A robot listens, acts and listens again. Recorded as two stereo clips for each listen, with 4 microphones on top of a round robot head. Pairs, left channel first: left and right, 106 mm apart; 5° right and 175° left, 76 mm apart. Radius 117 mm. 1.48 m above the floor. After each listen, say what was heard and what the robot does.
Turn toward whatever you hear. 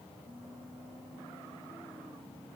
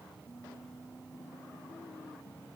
Keep listening.
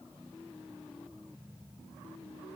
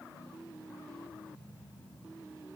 Keep listening.
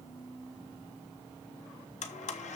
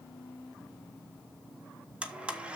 The blender: 95° left. Turn 95° left.
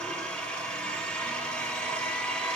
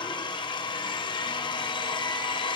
Facing the blender, 1 to 2 m away.